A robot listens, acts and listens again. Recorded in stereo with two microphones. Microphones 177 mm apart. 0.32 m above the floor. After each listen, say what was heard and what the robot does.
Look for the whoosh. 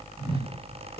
The whoosh: about 35° right or 145° right. Turn 35° right.
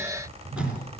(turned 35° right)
So it is at 105° right. Turn 105° right.
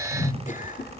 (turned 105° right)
The whoosh is now 35° left. Turn 35° left.
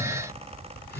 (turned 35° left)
Keep listening.
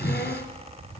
The whoosh is now 10° left. Turn 10° left.
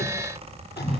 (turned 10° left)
Facing the whoosh.